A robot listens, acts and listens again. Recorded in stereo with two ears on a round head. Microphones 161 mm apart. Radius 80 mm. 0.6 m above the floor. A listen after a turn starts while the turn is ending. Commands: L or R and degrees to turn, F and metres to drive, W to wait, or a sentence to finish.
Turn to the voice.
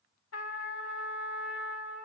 W
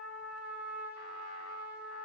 W
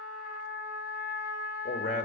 L45
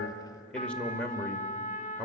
Found it: a man speaking, straight ahead, 1 to 2 m away.